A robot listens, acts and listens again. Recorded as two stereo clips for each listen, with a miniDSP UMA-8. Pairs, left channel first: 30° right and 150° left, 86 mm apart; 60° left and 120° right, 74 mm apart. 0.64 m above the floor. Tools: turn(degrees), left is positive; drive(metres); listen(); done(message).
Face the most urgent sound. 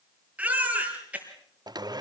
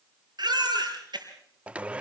turn(degrees=-135)
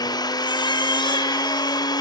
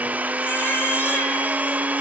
listen()
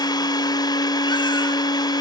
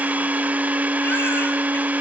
listen()
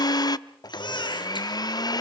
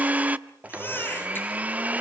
done("Found it: a baby crying, straight ahead.")